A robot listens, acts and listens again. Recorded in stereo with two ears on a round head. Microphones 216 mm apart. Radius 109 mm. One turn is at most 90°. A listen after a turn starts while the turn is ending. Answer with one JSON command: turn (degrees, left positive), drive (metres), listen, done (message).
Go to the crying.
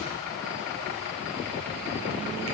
{"listen": true}
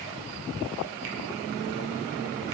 {"listen": true}
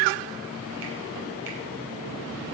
{"done": "I can't make out crying."}